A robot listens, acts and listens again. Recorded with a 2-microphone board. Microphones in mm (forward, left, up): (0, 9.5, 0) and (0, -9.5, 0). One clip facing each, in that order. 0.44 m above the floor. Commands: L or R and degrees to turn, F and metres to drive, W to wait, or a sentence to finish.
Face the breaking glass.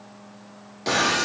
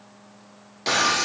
R20
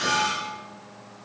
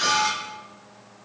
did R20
R140
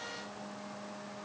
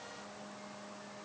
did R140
I heard breaking glass from this way, but can't make it out now.